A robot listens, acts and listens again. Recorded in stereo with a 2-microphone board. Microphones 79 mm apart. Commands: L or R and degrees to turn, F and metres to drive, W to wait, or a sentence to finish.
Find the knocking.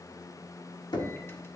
L65
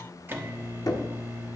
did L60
L50
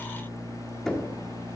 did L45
Found it: knocking, straight ahead, 1 to 2 m away.